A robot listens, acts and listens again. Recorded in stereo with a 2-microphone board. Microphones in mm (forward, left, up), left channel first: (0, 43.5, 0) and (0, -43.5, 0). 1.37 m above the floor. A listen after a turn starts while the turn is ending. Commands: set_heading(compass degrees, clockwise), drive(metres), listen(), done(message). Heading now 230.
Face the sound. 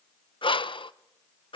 set_heading(155)
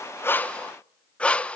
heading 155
set_heading(145)
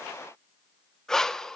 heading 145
done("Facing the breathing.")